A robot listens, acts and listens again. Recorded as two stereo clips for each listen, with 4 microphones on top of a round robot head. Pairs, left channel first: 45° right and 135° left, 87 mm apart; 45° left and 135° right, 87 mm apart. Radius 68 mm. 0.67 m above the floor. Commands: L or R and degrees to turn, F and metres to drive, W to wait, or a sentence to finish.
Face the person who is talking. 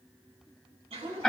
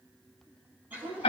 R175
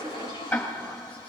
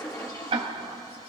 W
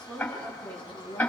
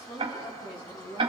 L30
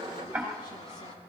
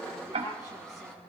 W
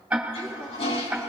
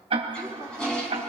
W
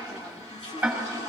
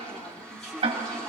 Facing where the woman speaking came from. I can't hear it now.